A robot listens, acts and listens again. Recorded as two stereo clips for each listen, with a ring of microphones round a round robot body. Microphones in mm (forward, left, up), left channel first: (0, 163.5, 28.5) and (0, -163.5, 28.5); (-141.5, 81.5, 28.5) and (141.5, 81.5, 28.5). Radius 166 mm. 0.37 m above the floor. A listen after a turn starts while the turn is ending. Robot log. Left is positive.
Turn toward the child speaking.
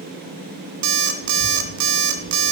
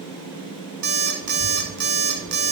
note: The child speaking: 85° left.
cmd yaw +85
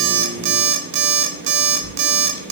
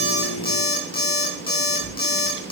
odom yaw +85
note: The child speaking is now 40° left.
cmd yaw +40
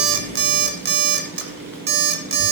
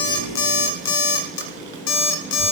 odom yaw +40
cmd idle
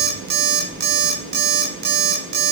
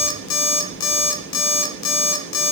end: Facing the child speaking.